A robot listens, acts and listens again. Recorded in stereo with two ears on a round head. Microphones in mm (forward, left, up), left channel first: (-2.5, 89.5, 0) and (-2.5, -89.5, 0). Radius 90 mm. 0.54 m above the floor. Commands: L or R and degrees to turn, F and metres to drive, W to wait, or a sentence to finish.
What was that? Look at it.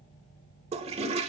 R35
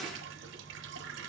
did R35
W
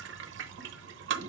R110
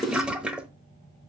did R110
Facing the toilet flushing.